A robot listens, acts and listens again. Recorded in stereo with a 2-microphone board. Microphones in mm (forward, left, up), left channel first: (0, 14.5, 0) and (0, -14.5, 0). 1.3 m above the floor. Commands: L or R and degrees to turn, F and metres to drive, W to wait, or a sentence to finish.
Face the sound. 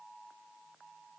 W
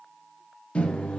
L40
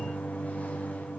L95
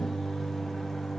L10
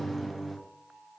Facing the microwave, under 1 m away.